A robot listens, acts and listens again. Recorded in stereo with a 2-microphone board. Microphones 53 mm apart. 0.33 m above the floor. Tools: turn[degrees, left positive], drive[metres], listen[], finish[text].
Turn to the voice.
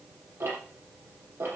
Action: listen[]
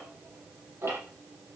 Action: listen[]
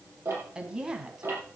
Action: turn[-30]
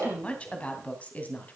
Thought: So it is at 30° left.
Action: turn[30]
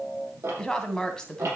Thought: The woman speaking is now 15° left.
Action: turn[15]
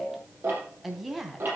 Action: finish[Facing the woman speaking.]